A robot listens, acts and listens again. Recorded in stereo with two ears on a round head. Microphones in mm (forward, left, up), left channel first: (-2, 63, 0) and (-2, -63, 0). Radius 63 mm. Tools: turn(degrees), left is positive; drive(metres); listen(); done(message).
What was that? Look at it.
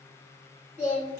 turn(degrees=-15)
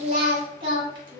turn(degrees=-35)
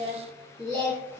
turn(degrees=-20)
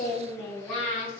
turn(degrees=10)
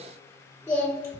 turn(degrees=10)
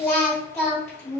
done("Facing the singing.")